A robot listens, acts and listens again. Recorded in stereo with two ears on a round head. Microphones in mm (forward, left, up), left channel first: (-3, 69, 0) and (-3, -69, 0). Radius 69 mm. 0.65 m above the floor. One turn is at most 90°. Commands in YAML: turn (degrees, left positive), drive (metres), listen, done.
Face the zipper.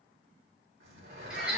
turn: -70
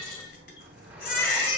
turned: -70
listen: true
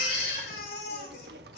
listen: true
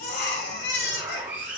turn: -15
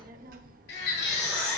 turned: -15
listen: true
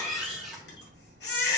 listen: true
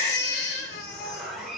done: "Found it: a zipper, straight ahead, 2 to 4 m away."